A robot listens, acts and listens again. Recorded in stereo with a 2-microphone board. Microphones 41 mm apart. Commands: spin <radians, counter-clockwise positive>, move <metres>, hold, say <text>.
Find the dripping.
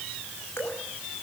spin 1.31
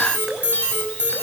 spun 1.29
hold
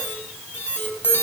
hold
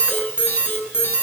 say I heard dripping, but can't make it out now. It was about straight ahead or 35° left.